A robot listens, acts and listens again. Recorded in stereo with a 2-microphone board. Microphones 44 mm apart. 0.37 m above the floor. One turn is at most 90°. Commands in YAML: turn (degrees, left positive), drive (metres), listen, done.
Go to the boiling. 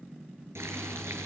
turn: -90
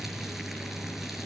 drive: 1.0
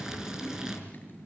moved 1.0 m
turn: -15
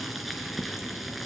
drive: 1.0
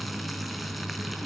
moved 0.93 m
drive: 1.0
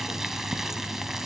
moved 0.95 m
turn: -10
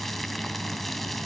drive: 1.0
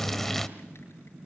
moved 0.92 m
turn: 10
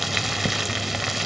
drive: 1.0
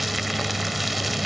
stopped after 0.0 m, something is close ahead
done: "I am next to the boiling."